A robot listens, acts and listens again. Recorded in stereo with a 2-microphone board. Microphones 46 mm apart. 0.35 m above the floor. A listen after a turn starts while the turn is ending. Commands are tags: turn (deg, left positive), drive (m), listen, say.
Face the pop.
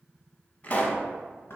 <turn deg="35"/>
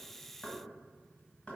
<listen/>
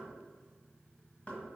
<say>I heard a pop, but can't make it out now. It was about straight ahead or 110° left.</say>